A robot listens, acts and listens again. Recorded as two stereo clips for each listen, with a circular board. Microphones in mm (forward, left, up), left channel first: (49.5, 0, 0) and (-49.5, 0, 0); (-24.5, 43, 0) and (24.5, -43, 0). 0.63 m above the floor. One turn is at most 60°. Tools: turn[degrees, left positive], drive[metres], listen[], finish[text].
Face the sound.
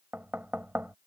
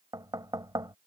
Thought: The knocking: 110° right.
Action: turn[-60]
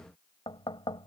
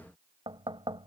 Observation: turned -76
Thought: The knocking is now 30° right.
Action: turn[-30]
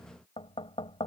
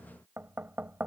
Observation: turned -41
Thought: The knocking is now 10° left.
Action: turn[10]
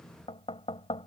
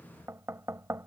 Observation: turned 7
Action: finish[Facing the knocking.]